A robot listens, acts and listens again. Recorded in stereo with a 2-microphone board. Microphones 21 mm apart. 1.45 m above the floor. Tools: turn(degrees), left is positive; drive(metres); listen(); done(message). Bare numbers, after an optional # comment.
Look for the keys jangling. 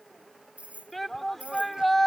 turn(-90)
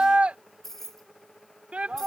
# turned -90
# So it is at 15° left.
turn(15)
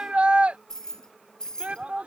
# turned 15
# The keys jangling is now 40° left.
turn(40)
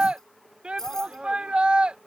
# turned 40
# The keys jangling is now 25° left.
turn(25)
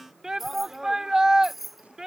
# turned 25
done("Found it: keys jangling, straight ahead.")